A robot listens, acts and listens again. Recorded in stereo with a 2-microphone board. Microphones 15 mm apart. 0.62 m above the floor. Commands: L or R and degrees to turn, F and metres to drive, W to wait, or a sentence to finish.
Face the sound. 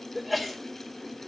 R30
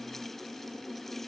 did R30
W
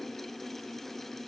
I heard a sneeze, but can't make it out now. It was about 25° left or 145° right.